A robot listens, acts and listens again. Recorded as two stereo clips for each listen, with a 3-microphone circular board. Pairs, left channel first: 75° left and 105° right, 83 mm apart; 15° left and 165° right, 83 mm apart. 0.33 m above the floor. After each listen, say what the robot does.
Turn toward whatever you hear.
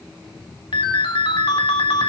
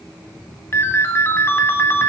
Turn 75° left.
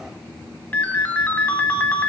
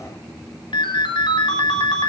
Found it: a ringtone, straight ahead.